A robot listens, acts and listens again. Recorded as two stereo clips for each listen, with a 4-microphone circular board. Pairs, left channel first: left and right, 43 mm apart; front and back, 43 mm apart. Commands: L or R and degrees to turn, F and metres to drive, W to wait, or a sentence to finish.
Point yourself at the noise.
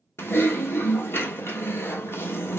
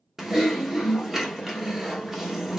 L95
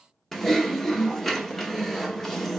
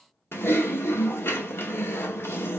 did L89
L10
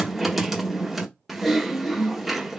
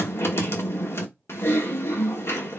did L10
Found it: typing on a keyboard, straight ahead, 1 to 2 m away.